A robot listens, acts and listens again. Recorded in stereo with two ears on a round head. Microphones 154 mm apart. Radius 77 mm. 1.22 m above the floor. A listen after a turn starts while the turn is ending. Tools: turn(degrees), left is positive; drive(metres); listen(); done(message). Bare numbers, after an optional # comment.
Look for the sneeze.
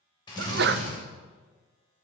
# The sneeze: about 60° right or 120° right.
turn(-60)
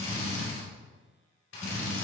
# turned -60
listen()
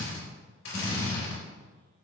done("I heard a sneeze, but can't make it out now. It was about straight ahead or 60° right.")